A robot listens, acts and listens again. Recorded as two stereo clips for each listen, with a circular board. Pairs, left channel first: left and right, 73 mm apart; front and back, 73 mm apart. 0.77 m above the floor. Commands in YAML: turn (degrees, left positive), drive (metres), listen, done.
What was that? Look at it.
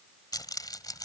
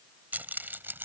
turn: 120
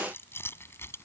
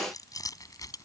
turn: 35
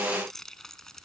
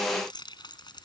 done: "Found it: keys jangling, straight ahead."